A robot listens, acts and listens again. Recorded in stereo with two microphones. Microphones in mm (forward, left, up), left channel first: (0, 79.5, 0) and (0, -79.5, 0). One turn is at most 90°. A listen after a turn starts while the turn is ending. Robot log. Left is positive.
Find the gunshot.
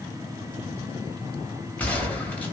cmd yaw +30
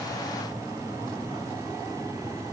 cmd idle
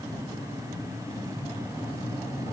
end: I heard a gunshot, but can't make it out now. It was about 20° right or 140° left.